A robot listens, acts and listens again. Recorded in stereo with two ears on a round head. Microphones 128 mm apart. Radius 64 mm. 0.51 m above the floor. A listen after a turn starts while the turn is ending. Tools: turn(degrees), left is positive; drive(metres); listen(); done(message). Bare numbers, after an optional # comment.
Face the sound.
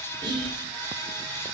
# The whispering: about 35° right or 145° right.
turn(-35)
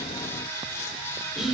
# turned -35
done("Found it: whispering, straight ahead, 1 to 2 m away.")